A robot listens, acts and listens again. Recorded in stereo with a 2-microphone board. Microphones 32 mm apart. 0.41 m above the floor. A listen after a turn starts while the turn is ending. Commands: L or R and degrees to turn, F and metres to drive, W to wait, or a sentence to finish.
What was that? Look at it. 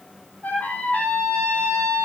L60
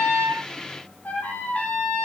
L55
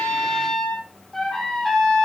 L10
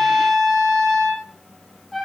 Found it: a trumpet, straight ahead, over 4 m away.